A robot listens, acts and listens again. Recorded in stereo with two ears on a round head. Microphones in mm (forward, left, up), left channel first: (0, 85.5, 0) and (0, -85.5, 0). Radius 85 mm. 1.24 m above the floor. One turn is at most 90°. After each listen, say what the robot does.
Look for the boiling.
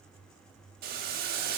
Turn 50° right.
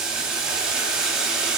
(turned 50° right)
Found it: boiling, straight ahead, 1 to 2 m away.